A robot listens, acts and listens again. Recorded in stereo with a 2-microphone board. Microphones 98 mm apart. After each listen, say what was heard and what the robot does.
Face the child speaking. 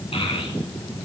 The child speaking: about 65° left or 115° left. Turn 65° left.
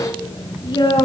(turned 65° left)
So it is at 50° left. Turn 50° left.
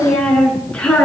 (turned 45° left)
The child speaking is now 10° left. Turn 10° left.
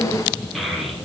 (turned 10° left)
Found it: a child speaking, straight ahead, over 4 m away.